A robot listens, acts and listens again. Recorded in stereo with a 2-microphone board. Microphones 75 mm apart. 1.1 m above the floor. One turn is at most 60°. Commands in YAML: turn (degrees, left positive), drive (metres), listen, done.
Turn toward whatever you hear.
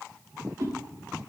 turn: -50
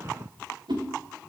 turn: -60
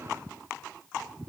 turn: -20
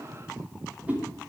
turn: -20
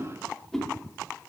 done: "Facing the whoosh, over 4 m away."